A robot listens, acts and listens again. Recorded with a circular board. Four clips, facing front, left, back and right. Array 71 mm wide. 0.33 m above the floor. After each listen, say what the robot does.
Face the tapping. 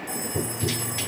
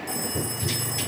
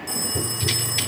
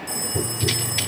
Turn 65° right.
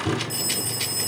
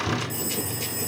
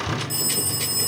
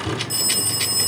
Turn 15° right.
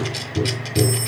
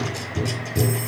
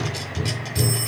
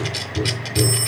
Found it: tapping, straight ahead.